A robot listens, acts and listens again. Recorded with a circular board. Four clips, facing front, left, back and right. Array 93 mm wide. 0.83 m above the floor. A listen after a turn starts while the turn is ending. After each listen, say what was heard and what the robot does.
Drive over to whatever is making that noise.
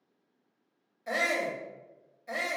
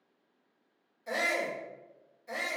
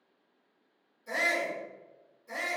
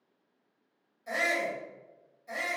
Drive 1.0 m forward.
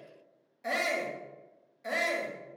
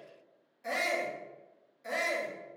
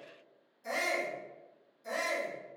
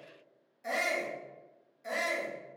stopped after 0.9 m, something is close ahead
I am next to the shout.